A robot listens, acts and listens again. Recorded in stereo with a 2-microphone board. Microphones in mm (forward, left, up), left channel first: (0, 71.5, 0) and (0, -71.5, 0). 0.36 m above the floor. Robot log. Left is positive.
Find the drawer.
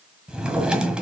cmd yaw -30
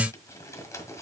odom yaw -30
cmd idle
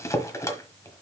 note: So it is at 25° left.
cmd yaw +25
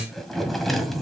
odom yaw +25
end: Found it: a drawer, straight ahead, 1 to 2 m away.